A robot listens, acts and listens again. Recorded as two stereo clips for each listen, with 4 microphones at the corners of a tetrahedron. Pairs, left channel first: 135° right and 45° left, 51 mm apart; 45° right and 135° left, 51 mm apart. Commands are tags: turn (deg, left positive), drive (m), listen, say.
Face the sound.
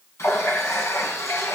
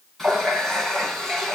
<turn deg="-125"/>
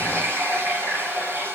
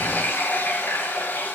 <say>Facing the running tap.</say>